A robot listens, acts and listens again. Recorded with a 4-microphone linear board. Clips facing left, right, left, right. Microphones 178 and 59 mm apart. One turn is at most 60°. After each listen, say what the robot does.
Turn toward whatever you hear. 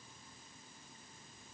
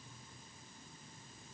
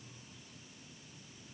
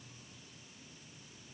Keep listening.
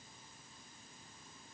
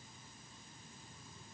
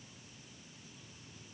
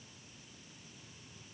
Keep listening.
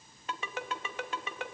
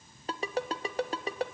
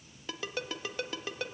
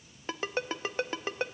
Turn 35° right.
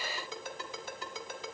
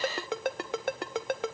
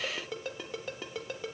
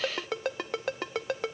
Turn 60° right.
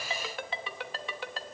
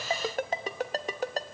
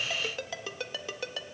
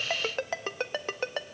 Turn 45° right.
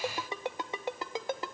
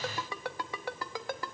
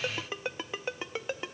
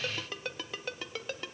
Turn 20° left.
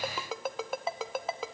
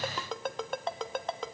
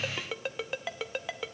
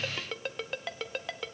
Facing the ringtone.